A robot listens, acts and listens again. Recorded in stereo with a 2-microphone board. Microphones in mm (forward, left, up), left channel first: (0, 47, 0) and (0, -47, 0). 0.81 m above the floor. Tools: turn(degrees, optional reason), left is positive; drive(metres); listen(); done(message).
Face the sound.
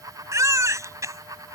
turn(degrees=-35, reason="The baby crying: about 35° right or 145° right.")
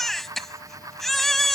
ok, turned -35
done("Facing the baby crying.")